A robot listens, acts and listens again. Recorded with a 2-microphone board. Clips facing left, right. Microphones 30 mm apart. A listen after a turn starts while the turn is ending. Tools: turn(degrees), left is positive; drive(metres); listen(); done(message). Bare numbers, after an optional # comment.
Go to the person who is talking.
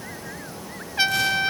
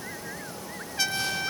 listen()
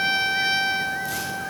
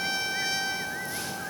listen()
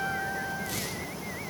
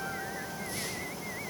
done("I can't make out anyone speaking, only a trumpet.")